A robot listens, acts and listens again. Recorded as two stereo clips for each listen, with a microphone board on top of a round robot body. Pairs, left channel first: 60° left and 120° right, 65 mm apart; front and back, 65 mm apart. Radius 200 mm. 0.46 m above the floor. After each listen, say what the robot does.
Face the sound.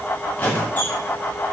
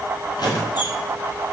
Facing the squeak, 2 to 4 m away.